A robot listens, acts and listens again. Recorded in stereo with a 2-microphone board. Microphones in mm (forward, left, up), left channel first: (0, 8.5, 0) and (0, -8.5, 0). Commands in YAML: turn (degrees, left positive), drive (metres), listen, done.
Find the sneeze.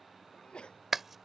turn: 90
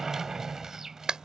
done: "Facing where the sneeze came from. I can't hear it now."